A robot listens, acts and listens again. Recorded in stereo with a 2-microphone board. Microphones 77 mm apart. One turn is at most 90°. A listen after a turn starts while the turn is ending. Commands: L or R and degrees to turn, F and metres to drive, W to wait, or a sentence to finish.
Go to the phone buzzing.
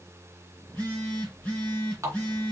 L20
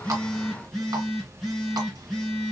F1.0
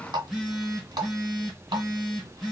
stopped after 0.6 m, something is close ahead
Something is in my way. I am facing the phone buzzing but have not reached it.